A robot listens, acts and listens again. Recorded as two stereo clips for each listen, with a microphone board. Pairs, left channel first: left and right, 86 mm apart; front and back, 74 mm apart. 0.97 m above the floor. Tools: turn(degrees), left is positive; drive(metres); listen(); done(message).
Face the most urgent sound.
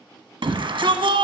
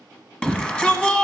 turn(degrees=-75)
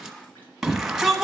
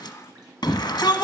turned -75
done("Found it: a shout, straight ahead.")